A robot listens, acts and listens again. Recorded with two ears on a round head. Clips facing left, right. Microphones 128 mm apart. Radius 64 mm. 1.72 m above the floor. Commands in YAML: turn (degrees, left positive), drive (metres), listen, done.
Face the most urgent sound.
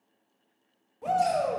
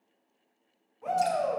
turn: 40
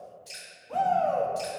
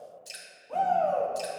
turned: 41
done: "Facing the shout, 1 to 2 m away."